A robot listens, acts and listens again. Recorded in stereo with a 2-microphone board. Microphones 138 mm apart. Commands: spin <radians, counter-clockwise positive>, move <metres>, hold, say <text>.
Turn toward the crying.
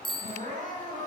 spin -1.22
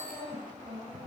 spin -0.70
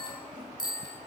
hold
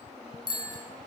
hold
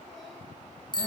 say Facing where the crying came from. I can't hear it now.